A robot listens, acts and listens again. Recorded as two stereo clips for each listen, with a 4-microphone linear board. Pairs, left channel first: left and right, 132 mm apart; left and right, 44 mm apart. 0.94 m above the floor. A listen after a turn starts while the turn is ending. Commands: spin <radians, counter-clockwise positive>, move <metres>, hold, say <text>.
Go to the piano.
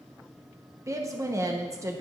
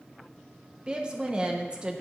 hold
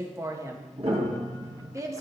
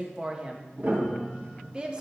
spin -0.87
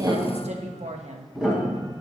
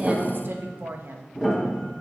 move 1.0
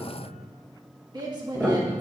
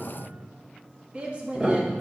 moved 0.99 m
move 1.0
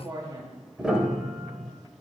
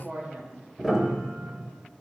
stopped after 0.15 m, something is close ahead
say Arrived at the piano, straight ahead.